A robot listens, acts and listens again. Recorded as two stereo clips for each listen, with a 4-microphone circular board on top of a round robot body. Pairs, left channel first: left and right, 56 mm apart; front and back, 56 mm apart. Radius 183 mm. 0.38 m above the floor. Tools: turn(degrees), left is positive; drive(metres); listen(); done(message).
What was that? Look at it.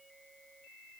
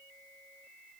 listen()
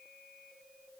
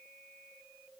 listen()
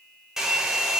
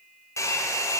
done("Facing the hair dryer.")